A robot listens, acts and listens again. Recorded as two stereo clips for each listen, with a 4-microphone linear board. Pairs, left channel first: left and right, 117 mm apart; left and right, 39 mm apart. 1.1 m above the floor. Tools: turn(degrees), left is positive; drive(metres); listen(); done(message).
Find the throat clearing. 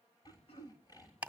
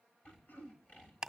turn(degrees=55)
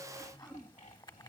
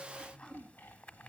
done("Facing the throat clearing, 1 to 2 m away.")